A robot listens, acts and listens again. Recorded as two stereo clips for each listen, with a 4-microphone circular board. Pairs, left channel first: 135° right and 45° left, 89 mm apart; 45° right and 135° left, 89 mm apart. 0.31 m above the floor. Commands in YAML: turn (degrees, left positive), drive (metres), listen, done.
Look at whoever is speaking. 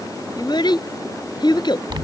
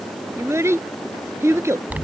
turn: -165
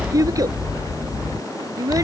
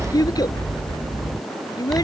done: "Facing the child speaking."